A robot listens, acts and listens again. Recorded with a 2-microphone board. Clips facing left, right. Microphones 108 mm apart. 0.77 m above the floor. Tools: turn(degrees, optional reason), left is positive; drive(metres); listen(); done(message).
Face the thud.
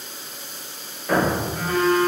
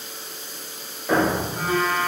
turn(degrees=-30)
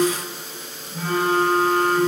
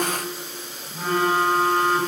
listen()
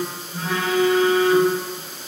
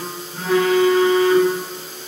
done("I heard a thud, but can't make it out now. It was about 20° left or 140° right.")